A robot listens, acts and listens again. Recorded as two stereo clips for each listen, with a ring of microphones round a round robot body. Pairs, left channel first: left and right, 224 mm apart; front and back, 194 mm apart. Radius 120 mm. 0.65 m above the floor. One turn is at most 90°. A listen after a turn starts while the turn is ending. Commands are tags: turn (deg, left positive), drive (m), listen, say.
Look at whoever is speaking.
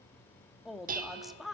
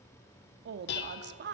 <turn deg="90"/>
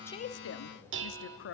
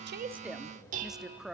<turn deg="90"/>
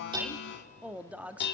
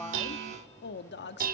<say>Found it: a woman speaking, straight ahead, under 1 m away.</say>